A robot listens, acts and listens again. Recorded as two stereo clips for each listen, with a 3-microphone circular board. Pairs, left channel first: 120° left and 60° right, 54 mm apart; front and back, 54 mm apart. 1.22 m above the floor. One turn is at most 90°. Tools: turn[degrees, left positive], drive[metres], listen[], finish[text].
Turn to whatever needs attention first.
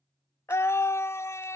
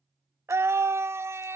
Thought: The scream: 150° left.
Action: turn[90]
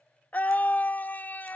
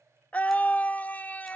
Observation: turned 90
Thought: The scream is now 60° left.
Action: turn[60]
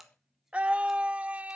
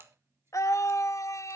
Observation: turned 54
Action: finish[Facing the scream.]